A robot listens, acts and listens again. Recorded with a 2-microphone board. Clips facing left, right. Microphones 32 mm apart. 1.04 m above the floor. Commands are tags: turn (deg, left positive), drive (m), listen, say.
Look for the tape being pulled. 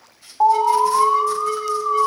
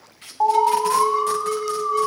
<turn deg="-70"/>
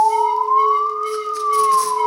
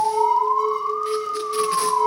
<listen/>
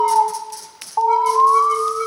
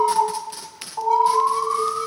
<turn deg="-35"/>
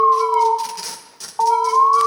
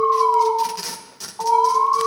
<say>Found it: tape being pulled, straight ahead.</say>